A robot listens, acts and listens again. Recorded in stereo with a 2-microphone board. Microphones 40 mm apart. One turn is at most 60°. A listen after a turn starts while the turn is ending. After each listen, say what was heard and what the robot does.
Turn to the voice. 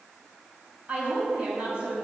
The woman speaking: about 50° right or 130° right. Turn 50° right.
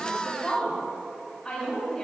Found it: a woman speaking, straight ahead, 2 to 4 m away.